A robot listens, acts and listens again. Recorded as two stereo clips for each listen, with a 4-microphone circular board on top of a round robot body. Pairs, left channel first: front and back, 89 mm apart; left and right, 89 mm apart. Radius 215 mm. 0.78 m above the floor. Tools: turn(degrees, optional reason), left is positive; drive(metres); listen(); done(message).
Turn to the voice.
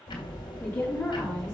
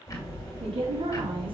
turn(degrees=-65, reason="The woman speaking: 65° right.")
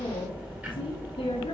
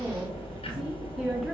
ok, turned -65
done("Found it: a woman speaking, straight ahead.")